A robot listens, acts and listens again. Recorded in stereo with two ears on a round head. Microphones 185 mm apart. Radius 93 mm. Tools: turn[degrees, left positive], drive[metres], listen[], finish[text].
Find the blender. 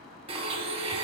Thought: The blender: about 30° right or 150° right.
Action: turn[-30]
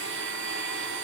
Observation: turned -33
Thought: So it is at 120° right.
Action: turn[-120]
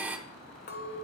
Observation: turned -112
Thought: The blender is now 10° right.
Action: turn[-10]
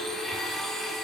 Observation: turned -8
Action: finish[Found it: a blender, straight ahead.]